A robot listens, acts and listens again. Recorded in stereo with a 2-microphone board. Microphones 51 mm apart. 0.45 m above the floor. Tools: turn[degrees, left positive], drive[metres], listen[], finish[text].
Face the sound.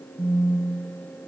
Thought: The phone buzzing: about 25° left or 155° left.
Action: turn[25]
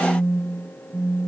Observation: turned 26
Action: finish[Facing the phone buzzing, 2 to 4 m away.]